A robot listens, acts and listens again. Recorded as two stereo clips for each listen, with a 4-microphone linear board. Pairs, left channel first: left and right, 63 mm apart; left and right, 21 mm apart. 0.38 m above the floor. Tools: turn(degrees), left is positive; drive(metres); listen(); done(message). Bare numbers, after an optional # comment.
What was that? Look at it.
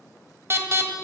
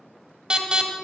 # The alarm: about 45° right or 135° right.
turn(-45)
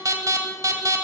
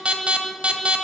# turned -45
# So it is at 85° right.
turn(-85)
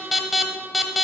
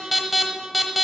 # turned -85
done("Facing the alarm, 1 to 2 m away.")